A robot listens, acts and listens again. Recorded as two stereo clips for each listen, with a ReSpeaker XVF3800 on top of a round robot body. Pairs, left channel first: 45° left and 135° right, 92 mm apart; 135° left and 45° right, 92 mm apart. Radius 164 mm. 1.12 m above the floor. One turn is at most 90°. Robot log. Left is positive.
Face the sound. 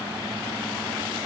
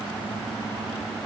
cmd idle
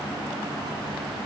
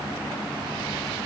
cmd idle
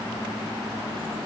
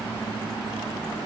end: I can't make out anything.